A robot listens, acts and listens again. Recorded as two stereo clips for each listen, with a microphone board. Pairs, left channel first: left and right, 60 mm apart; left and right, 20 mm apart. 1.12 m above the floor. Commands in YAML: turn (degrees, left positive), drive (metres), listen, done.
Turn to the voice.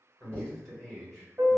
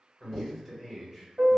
turn: 30
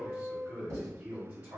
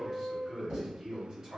turn: -30
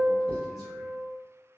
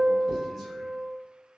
listen: true
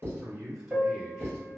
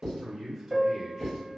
done: "Facing the man speaking."